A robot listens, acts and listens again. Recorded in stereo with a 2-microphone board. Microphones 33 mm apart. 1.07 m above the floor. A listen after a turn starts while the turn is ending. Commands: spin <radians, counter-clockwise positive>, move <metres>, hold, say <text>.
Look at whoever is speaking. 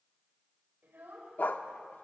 spin -1.57
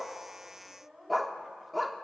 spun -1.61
spin -0.17
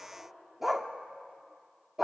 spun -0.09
hold
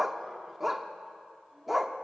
hold
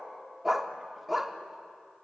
say I heard a child speaking from this way, but can't make it out now.